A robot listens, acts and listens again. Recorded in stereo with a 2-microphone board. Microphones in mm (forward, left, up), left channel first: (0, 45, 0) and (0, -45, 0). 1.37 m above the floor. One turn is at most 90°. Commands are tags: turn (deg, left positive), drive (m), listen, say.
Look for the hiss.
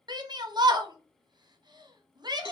<listen/>
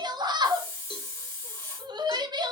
<turn deg="30"/>
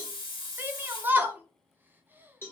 <turn deg="90"/>
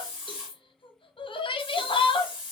<say>Facing the hiss.</say>